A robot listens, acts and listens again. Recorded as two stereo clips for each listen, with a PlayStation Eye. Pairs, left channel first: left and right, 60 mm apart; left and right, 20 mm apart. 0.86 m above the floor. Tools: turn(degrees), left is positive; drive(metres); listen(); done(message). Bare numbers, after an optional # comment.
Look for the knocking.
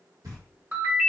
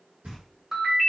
turn(-90)
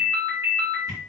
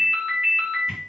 listen()
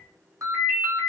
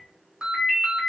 listen()
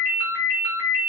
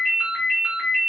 done("I heard knocking from this way, but can't make it out now.")